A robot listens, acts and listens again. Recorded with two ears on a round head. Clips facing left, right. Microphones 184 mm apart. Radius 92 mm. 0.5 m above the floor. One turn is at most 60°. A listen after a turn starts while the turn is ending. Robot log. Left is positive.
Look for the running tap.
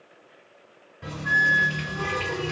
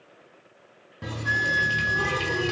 note: The running tap: about 55° right or 125° right.
cmd yaw -55
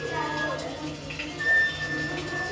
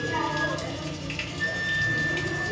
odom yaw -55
note: So it is at 65° right.
cmd yaw -60
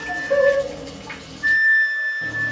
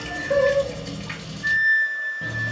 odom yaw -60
note: The running tap is now 25° right.
cmd yaw -25
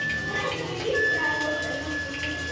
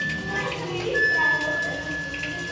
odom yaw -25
note: The running tap is now 10° left.
cmd yaw +10
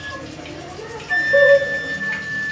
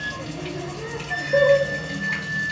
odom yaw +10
end: Found it: a running tap, straight ahead, 1 to 2 m away.